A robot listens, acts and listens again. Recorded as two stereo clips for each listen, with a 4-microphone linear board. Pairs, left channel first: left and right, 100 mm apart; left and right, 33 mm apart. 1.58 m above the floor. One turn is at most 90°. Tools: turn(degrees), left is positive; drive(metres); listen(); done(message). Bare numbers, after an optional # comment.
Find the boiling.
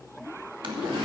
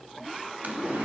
# The boiling: about 55° right or 125° right.
turn(-55)
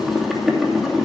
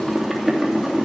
done("Found it: boiling, straight ahead.")